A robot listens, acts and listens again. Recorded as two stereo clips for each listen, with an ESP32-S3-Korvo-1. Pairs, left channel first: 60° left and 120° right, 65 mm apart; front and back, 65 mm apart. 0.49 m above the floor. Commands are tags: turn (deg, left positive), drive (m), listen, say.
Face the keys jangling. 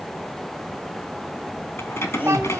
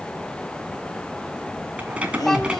<turn deg="105"/>
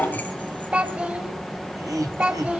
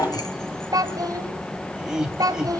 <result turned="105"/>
<say>Found it: keys jangling, straight ahead, 2 to 4 m away.</say>